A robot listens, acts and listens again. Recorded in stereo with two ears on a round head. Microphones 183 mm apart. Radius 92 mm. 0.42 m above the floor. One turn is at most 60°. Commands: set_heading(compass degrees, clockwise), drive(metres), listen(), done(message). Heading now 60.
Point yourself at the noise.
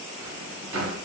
set_heading(120)
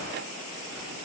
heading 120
listen()
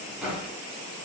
done("Found it: a drawer, straight ahead, 1 to 2 m away.")